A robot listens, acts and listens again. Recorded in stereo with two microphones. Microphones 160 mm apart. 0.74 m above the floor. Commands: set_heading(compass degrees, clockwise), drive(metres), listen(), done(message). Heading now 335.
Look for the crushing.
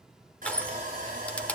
set_heading(305)
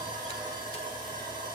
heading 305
listen()
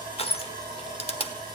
set_heading(165)
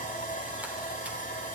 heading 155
set_heading(165)
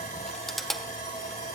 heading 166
done("Facing the crushing.")